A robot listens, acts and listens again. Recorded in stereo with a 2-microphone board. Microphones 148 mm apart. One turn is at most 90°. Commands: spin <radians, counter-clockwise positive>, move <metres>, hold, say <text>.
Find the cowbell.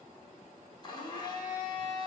hold
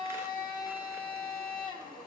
hold
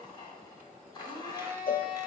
spin 1.57
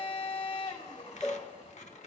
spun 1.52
say Found it: a cowbell, straight ahead, under 1 m away.